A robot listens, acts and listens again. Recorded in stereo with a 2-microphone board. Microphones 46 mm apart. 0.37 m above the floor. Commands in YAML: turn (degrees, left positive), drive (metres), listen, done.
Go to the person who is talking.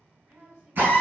turn: -55
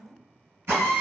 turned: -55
turn: -25
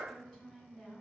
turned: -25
drive: 1.0
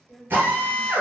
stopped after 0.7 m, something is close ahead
done: "Arrived at the woman speaking, straight ahead."